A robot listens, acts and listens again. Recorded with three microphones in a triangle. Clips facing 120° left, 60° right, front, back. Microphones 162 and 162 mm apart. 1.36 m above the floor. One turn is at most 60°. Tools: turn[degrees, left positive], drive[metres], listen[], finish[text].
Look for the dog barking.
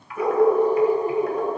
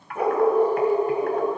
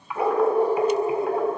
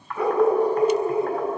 Thought: The dog barking: 60° right.
Action: turn[-60]
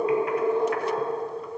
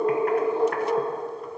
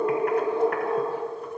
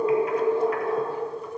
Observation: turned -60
Thought: The dog barking is now 15° right.
Action: turn[-15]
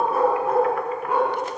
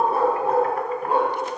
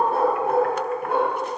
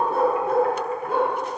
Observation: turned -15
Action: finish[Facing the dog barking, 2 to 4 m away.]